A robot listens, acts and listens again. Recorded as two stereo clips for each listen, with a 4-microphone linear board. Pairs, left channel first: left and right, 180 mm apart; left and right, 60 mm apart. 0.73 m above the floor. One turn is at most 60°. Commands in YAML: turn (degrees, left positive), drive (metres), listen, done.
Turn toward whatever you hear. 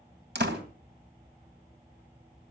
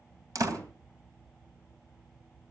turn: -60
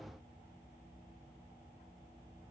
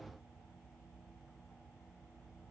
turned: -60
turn: -30
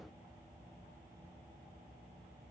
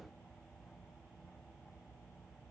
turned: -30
done: "I heard a door slam from this way, but can't make it out now."